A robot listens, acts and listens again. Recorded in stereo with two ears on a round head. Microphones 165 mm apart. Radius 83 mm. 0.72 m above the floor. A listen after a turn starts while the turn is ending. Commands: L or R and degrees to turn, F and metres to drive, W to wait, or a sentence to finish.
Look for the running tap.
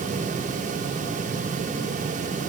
W
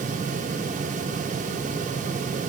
W
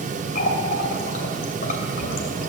L50
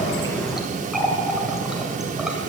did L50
Found it: a running tap, straight ahead.